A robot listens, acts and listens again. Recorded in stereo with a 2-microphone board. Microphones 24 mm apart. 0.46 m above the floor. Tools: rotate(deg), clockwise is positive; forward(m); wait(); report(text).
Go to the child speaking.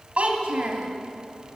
rotate(55)
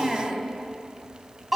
forward(1.0)
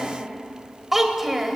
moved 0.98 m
rotate(10)
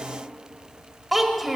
forward(1.0)
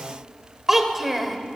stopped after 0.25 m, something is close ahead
rotate(10)
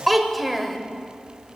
report("Arrived at the child speaking, straight ahead.")